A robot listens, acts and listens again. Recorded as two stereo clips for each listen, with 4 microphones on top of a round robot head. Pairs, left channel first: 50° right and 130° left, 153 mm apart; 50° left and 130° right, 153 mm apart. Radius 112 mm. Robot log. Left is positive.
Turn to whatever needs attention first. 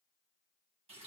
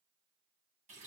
cmd idle
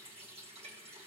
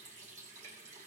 cmd idle
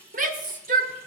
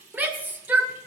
note: The shout: 150° left.
cmd yaw +150
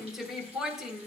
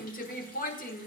note: The shout is now 45° left.
cmd yaw +45
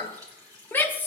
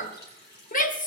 note: The shout is now 30° left.
cmd yaw +30
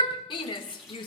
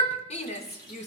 end: Found it: a shout, straight ahead.